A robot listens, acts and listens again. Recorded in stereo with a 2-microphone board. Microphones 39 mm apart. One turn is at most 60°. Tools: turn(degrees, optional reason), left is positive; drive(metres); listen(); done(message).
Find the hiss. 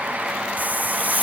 turn(degrees=-45, reason="The hiss: about 45° right or 135° right.")
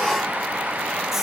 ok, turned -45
listen()
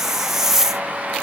turn(degrees=-10, reason="So it is at 10° right.")
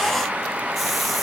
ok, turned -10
listen()
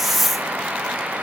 done("Found it: a hiss, straight ahead.")